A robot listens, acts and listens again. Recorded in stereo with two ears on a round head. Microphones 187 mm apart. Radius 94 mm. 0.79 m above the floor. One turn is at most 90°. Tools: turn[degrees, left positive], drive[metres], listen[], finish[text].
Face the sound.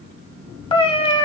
Thought: The cat meowing: about 30° left or 150° left.
Action: turn[30]
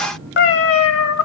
Thought: So it is at 110° left.
Action: turn[90]
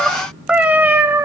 Thought: The cat meowing is now 15° right.
Action: turn[-15]
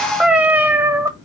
Thought: The cat meowing is now 15° right.
Action: turn[-15]
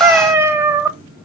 Thought: The cat meowing is now 15° right.
Action: turn[-15]
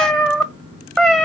Action: finish[Found it: a cat meowing, straight ahead, 1 to 2 m away.]